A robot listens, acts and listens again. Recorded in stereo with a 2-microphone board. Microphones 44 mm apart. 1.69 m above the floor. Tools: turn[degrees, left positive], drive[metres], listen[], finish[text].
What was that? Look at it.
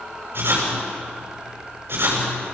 Thought: The writing: about 60° right or 120° right.
Action: turn[-60]
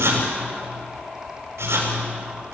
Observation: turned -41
Thought: So it is at 80° right.
Action: turn[-80]
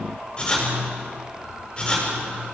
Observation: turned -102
Thought: The writing is now 25° left.
Action: turn[25]
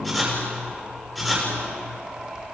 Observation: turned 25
Action: finish[Found it: writing, straight ahead, over 4 m away.]